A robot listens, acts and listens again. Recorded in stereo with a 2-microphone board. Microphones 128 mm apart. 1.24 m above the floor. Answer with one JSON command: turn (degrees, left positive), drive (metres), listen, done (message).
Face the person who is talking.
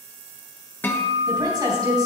{"turn": -30}
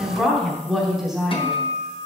{"done": "Facing the woman speaking."}